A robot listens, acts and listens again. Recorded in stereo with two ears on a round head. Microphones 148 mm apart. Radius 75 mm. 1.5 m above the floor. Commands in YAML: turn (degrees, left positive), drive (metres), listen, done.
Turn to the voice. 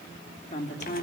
turn: 45
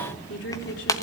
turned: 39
turn: 100
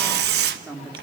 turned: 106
done: "Found it: a woman speaking, straight ahead, 2 to 4 m away."